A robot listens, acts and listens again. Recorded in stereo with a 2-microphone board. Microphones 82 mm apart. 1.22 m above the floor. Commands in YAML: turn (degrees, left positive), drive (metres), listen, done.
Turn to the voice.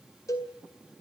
listen: true
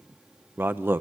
turn: -25
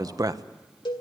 turn: -125
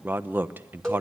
turn: -25
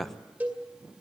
done: "Facing the man speaking."